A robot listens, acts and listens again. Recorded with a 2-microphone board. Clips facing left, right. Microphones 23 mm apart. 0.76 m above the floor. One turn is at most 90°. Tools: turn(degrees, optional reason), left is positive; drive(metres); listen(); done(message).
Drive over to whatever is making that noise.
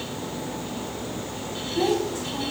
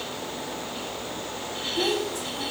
turn(degrees=25, reason="The child speaking: about 25° left or 155° left.")
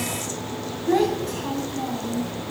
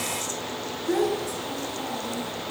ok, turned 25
turn(degrees=90, reason="So it is at 130° left.")
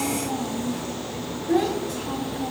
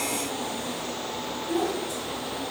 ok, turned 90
turn(degrees=40, reason="The child speaking is now 40° left.")
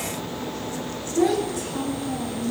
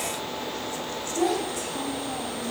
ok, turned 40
drive(metres=1.0)
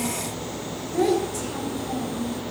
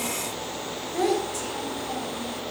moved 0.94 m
turn(degrees=-10, reason="The child speaking is now 10° right.")
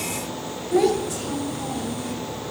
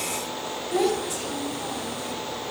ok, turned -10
drive(metres=1.0)
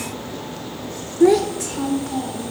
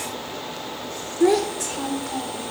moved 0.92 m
drive(metres=1.0)
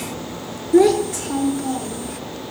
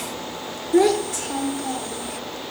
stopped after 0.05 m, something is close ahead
done("I am next to the child speaking.")